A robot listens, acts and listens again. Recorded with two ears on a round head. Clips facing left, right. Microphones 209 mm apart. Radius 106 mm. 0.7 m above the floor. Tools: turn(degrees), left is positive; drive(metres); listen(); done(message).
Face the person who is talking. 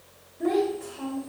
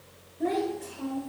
turn(degrees=30)
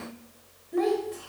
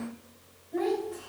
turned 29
turn(degrees=145)
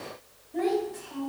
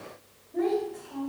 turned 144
done("Facing the child speaking, 2 to 4 m away.")